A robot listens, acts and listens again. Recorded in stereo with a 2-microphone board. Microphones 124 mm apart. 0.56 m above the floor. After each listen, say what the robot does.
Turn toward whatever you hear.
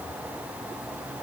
Keep listening.
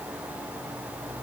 Keep listening.
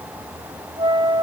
Turn 40° right.
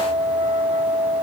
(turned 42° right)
Turn 100° right.
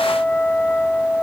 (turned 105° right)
Turn 10° left.
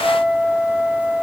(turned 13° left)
Facing the flute, 1 to 2 m away.